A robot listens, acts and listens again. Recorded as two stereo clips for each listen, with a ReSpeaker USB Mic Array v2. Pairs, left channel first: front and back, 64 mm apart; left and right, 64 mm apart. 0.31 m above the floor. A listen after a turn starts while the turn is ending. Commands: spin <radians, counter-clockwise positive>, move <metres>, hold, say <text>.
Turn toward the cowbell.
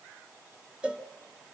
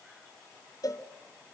spin 1.83
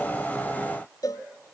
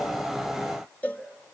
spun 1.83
spin 0.35
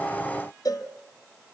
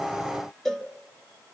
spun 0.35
say Found it: a cowbell, straight ahead, 1 to 2 m away.